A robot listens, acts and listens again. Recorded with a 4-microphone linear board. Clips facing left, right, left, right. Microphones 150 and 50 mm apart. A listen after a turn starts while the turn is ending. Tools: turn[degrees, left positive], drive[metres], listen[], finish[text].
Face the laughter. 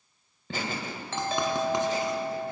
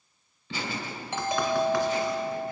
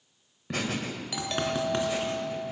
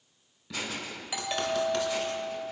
Thought: The laughter: about 45° left or 135° left.
Action: turn[45]
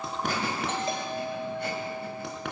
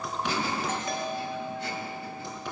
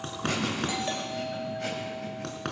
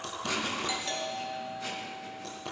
Action: listen[]
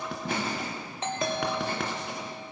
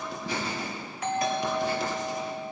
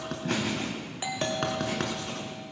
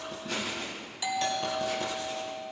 Thought: So it is at 130° left.
Action: turn[130]
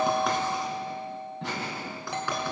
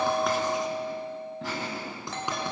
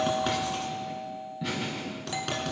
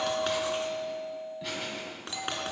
Action: finish[Facing the laughter.]